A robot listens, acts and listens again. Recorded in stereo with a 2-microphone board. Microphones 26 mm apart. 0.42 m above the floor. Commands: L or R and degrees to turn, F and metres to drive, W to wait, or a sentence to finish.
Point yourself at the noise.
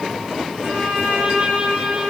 R55
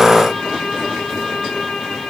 Facing the violin.